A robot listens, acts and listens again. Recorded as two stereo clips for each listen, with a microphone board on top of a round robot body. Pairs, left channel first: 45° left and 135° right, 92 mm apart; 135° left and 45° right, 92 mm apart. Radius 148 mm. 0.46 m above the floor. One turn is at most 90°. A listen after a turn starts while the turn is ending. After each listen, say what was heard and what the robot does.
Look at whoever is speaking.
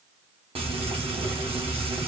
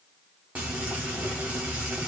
Keep listening.
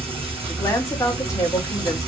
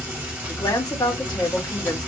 The woman speaking: 95° left. Turn 90° left.
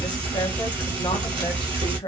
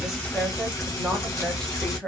The woman speaking is now 50° left. Turn 50° left.
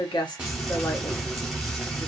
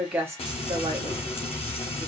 Keep listening.
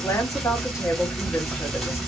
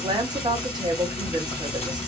The woman speaking is now 10° right. Turn 10° right.
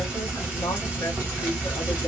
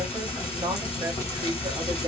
Keep listening.
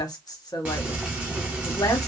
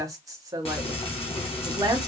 Found it: a woman speaking, straight ahead, 1 to 2 m away.